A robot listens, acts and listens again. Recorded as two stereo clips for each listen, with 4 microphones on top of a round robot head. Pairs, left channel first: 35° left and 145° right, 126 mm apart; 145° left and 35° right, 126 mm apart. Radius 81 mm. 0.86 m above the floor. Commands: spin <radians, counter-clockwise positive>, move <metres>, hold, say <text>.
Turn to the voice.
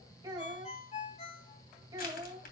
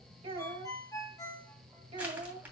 spin -1.48
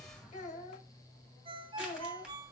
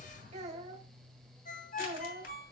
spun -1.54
say Found it: a child speaking, straight ahead, 2 to 4 m away.